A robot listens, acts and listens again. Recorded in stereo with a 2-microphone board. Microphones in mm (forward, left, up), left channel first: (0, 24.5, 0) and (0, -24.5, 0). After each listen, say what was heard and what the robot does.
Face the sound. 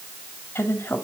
The woman speaking: about 50° left or 130° left. Turn 50° left.
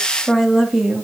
Found it: a woman speaking, straight ahead, 2 to 4 m away.